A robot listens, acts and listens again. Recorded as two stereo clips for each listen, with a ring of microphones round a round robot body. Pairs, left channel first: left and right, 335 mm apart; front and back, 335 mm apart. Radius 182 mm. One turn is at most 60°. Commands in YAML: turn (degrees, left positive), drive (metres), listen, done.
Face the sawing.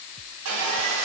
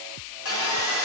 turn: -50
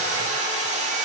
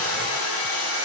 turn: -20
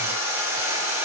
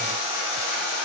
done: "Found it: sawing, straight ahead, 1 to 2 m away."